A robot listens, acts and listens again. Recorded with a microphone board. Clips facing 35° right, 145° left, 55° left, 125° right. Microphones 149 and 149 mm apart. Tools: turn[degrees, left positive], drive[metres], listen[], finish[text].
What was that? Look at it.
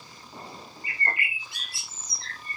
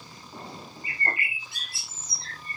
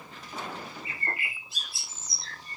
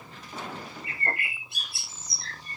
Thought: The bird: 150° right.
Action: turn[-150]
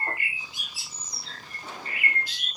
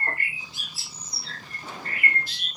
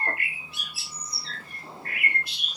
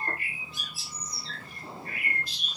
Thought: The bird is now 45° left.
Action: turn[45]
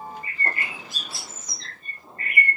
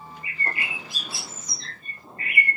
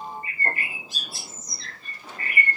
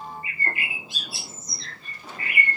Thought: The bird is now 10° left.
Action: turn[10]
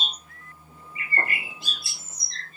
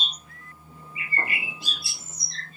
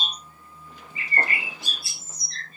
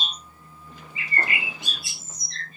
Action: finish[Facing the bird.]